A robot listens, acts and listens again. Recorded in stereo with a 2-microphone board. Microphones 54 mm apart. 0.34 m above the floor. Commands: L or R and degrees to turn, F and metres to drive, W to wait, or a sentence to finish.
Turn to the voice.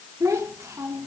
R65
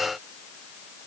W
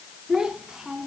R10
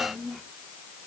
Facing the child speaking.